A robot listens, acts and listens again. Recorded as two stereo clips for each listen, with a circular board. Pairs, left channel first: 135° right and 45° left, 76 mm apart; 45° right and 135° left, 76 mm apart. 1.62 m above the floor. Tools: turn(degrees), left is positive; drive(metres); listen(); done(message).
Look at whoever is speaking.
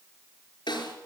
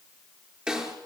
listen()
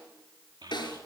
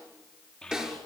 turn(degrees=30)
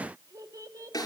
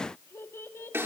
turn(degrees=10)
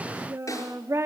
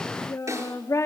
done("Found it: a child speaking, straight ahead.")